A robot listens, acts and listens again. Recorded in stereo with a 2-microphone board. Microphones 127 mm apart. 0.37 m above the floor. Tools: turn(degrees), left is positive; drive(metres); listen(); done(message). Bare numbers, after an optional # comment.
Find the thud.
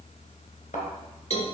turn(90)
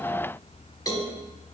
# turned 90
done("I heard a thud from this way, but can't make it out now.")